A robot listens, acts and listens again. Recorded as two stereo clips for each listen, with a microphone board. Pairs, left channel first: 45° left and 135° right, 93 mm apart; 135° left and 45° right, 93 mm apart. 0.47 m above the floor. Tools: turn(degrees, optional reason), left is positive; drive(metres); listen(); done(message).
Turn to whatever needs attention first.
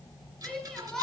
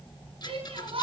turn(degrees=-40, reason="The shout: 40° right.")
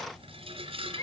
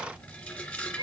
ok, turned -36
done("Found it: a shout, straight ahead.")